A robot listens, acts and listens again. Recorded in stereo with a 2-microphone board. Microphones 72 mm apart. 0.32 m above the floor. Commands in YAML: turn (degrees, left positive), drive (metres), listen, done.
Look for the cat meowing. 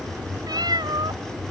turn: -65
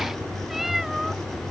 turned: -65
done: "Facing the cat meowing."